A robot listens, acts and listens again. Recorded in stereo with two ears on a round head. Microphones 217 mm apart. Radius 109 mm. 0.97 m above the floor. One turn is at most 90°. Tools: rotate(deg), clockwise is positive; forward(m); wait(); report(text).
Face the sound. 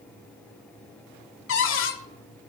rotate(-55)
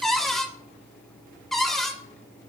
report("Found it: a cupboard door, straight ahead.")